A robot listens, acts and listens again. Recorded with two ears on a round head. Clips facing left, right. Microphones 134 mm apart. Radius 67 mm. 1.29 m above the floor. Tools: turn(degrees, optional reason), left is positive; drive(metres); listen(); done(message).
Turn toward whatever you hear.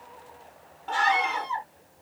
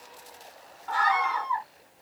turn(degrees=30, reason="The scream: about 30° left or 150° left.")
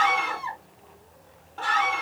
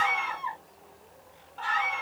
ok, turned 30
turn(degrees=120, reason="So it is at 120° left.")
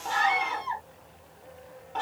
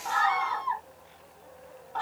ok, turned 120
turn(degrees=25, reason="The scream is now 25° left.")
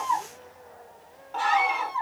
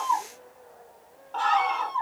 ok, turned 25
turn(degrees=10, reason="The scream is now 10° left.")
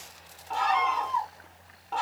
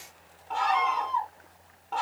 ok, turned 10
done("Found it: a scream, straight ahead.")